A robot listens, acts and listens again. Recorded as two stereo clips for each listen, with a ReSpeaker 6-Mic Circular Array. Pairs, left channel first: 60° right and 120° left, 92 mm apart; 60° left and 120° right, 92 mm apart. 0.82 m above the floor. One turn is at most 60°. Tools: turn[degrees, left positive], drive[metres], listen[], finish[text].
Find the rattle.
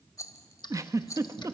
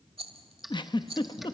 Thought: The rattle: 115° right.
Action: turn[-60]
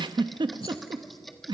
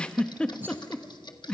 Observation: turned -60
Thought: Nothing new. It was at 55° right.
Action: turn[-55]
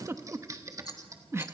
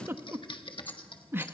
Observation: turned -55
Action: listen[]
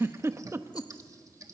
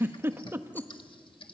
Action: finish[Facing where the rattle came from. I can't hear it now.]